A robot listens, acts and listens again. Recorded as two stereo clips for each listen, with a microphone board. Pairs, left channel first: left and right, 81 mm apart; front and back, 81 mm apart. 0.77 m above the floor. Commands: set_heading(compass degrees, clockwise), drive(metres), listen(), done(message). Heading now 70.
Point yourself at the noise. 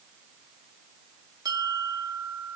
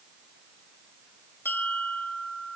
set_heading(130)
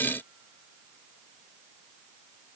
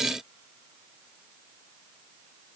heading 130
listen()
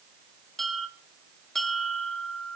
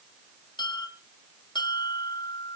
done("Found it: a bell, straight ahead.")